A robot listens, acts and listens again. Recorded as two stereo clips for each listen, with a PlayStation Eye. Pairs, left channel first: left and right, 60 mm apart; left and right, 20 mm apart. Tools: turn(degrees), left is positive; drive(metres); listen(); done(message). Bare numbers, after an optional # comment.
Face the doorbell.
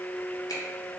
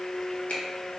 listen()
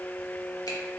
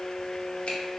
listen()
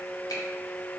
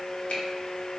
done("I can't make out a doorbell.")